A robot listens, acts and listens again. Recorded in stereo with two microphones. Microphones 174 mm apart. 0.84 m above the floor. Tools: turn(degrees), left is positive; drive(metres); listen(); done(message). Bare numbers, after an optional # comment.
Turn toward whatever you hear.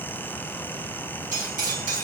# The cutlery clinking: about 55° right or 125° right.
turn(-55)
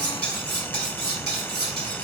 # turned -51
# So it is at 75° right.
turn(-75)
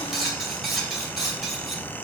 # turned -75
done("Found it: cutlery clinking, straight ahead.")